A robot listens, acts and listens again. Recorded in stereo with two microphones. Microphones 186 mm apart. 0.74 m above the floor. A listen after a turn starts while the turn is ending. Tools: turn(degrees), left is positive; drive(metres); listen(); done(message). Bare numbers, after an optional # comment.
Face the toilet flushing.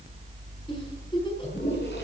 # The toilet flushing: about 65° left or 115° left.
turn(65)
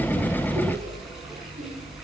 listen()
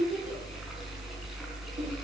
listen()
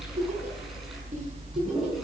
done("Facing the toilet flushing, over 4 m away.")